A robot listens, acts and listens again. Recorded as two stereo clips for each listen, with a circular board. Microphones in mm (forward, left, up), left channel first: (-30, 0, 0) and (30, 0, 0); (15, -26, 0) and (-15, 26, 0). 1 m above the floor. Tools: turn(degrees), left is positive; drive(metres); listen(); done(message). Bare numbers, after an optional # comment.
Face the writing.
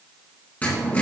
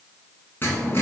# The writing: 115° right.
turn(-115)
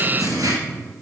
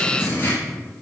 # The writing is now 10° right.
turn(-10)
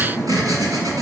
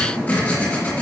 done("Found it: writing, straight ahead.")